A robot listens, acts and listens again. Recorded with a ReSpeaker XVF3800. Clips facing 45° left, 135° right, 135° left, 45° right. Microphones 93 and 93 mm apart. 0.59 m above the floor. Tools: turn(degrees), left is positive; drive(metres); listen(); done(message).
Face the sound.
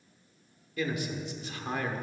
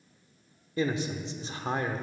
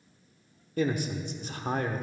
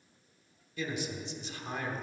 turn(degrees=165)
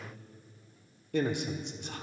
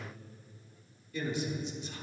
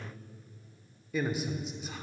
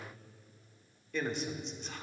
turn(degrees=50)
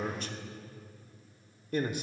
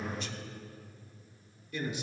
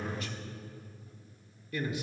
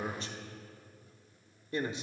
turn(degrees=10)
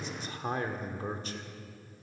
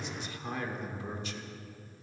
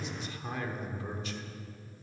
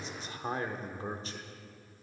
done("Facing the man speaking, 1 to 2 m away.")